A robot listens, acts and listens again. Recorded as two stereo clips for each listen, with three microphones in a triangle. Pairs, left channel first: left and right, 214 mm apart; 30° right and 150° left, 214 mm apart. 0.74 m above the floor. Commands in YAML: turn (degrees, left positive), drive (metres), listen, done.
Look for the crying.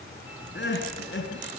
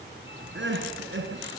turn: 120
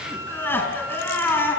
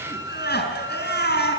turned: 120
turn: 10
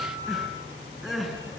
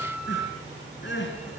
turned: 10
done: "Facing the crying, over 4 m away."